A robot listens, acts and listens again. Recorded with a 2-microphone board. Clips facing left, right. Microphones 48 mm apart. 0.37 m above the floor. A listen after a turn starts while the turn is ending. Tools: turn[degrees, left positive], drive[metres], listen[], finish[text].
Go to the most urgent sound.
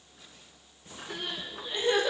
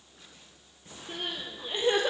Thought: The crying: about 30° right or 150° right.
Action: turn[-30]
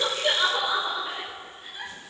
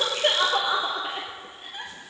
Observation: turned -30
Thought: So it is at 120° right.
Action: turn[-120]
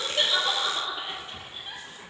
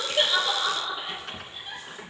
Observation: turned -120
Thought: The crying is now 10° left.
Action: turn[10]
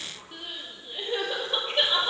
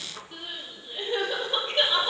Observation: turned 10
Action: drive[1.0]
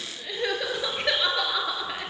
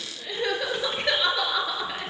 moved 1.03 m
Action: drive[1.0]
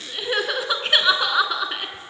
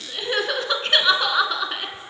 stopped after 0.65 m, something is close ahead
Action: finish[Arrived at the crying, straight ahead.]